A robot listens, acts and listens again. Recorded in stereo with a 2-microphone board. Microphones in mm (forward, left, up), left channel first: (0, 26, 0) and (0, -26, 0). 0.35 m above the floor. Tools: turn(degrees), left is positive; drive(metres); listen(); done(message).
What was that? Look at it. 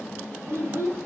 turn(degrees=-45)
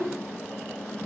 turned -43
turn(degrees=-105)
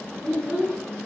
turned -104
done("Facing the child speaking.")